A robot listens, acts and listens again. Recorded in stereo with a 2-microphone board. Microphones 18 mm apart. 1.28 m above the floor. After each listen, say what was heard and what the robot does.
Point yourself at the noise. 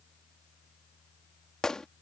The gunshot: about 45° left or 135° left. Turn 45° left.
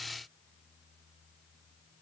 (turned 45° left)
Keep listening.
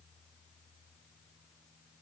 I heard a gunshot, but can't make it out now. It was about straight ahead or 90° left.